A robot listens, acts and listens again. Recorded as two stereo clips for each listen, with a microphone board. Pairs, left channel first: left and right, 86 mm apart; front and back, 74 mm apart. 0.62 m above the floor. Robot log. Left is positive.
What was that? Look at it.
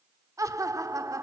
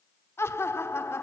note: The laughter: 50° right.
cmd yaw -50
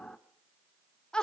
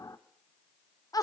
note: The laughter is now 10° left.
cmd yaw +10
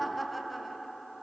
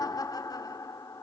end: Facing the laughter, 1 to 2 m away.